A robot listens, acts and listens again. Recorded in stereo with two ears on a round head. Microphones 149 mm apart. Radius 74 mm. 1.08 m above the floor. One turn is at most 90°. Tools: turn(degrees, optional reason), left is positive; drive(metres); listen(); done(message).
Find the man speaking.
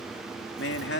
turn(degrees=70, reason="The man speaking: about 70° left or 110° left.")
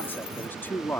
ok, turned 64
turn(degrees=15, reason="So it is at 15° left.")
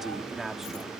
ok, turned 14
done("Found it: a man speaking, straight ahead.")